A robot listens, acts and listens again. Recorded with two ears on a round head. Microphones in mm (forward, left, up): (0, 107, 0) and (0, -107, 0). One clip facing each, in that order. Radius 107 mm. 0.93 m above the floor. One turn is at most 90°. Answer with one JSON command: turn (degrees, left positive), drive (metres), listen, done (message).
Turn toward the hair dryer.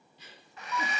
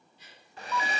{"turn": -30}
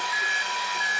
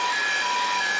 {"listen": true}
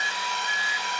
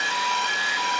{"listen": true}
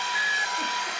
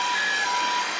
{"turn": -90}
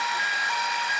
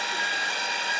{"turn": -35}
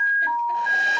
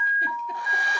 {"listen": true}
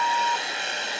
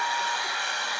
{"turn": 20}
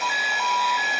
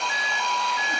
{"listen": true}
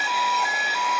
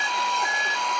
{"listen": true}
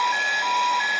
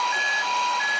{"done": "Facing where the hair dryer came from. I can't hear it now."}